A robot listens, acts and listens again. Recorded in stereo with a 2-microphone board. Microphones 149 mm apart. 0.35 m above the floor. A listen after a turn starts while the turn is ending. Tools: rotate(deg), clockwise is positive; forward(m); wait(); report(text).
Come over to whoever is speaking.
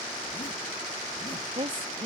rotate(40)
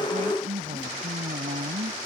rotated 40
rotate(95)
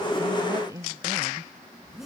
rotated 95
rotate(25)
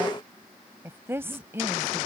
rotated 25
rotate(20)
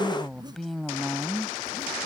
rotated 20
forward(1.0)
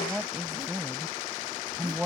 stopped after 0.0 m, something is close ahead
report("Something is in my way. I am facing the woman speaking but have not reached it.")